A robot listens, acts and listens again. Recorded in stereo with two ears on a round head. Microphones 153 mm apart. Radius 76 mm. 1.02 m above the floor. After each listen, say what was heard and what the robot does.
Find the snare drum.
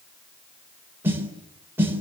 Turn 30° right.
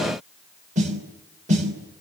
So it is at 135° right. Turn 135° right.
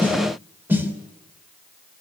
The snare drum is now 10° right. Turn 10° right.
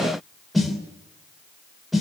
Facing the snare drum, 2 to 4 m away.